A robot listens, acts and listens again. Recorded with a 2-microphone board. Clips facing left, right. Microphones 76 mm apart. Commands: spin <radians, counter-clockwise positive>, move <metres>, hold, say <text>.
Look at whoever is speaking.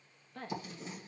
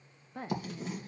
spin -0.52
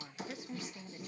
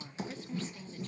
spin 0.26
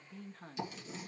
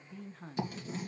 say Found it: a woman speaking, straight ahead.